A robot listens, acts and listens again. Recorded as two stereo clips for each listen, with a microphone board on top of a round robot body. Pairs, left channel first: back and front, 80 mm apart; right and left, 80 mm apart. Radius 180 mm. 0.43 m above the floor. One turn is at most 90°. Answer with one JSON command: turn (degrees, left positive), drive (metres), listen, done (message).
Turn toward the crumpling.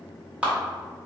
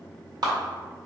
{"listen": true}
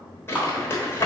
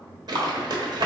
{"turn": 90}
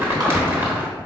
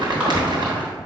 {"turn": 60}
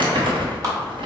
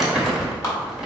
{"done": "Facing the crumpling, 1 to 2 m away."}